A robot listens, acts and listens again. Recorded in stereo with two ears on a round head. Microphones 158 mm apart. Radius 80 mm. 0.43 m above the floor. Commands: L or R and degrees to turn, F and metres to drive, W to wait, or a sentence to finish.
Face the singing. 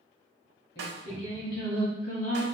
L45
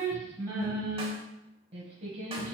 R45
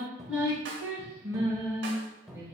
R15
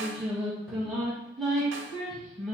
Found it: singing, straight ahead, 1 to 2 m away.